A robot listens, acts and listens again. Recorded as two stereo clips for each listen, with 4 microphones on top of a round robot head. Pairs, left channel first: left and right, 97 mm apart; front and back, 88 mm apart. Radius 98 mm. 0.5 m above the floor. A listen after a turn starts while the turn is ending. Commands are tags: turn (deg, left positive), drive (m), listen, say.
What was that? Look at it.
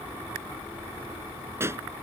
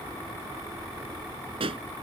<turn deg="-155"/>
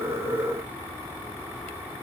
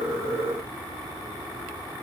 <say>I heard a pop from this way, but can't make it out now.</say>